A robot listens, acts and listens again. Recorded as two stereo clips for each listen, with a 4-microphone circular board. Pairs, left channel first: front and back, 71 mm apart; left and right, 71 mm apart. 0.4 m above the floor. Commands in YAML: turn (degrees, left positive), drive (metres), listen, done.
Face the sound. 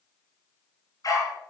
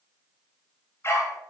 turn: 40
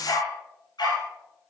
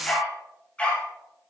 turn: 15
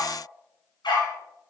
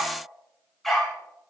done: "Found it: a dog barking, straight ahead, over 4 m away."